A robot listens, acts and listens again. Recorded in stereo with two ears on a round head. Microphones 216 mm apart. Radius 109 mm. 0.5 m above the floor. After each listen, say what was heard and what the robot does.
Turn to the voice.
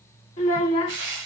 The child speaking: about 25° left or 155° left. Turn 25° left.
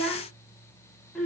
Facing the child speaking, 1 to 2 m away.